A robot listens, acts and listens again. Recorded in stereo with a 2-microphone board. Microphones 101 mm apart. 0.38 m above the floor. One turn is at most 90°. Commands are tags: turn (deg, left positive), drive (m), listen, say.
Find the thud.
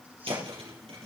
<turn deg="-75"/>
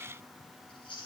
<listen/>
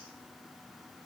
<say>I heard a thud, but can't make it out now. It was about straight ahead or 30° right.</say>